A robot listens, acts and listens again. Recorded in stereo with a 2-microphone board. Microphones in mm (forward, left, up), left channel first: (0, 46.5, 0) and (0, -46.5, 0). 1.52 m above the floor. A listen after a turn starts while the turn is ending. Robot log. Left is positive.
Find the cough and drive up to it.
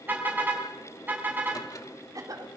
note: The cough: about 40° right or 140° right.
cmd yaw -40
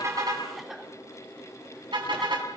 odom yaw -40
cmd fwd 1.0
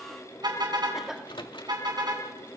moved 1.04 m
cmd fwd 1.0
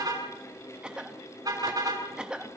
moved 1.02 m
note: The cough is now 10° right.
cmd yaw -10
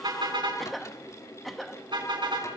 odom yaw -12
cmd fwd 1.0
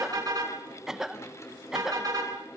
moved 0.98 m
cmd fwd 1.0
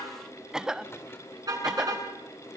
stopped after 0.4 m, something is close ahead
end: I am next to the cough.